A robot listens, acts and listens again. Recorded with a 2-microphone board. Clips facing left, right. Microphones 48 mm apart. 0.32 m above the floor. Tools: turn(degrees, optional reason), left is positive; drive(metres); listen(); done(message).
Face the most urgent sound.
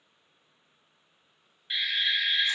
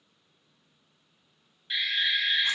turn(degrees=30)
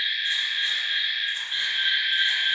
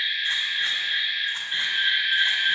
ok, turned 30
turn(degrees=-15, reason="So it is at 15° right.")
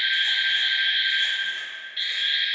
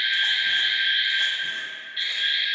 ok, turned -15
done("Found it: an alarm, straight ahead.")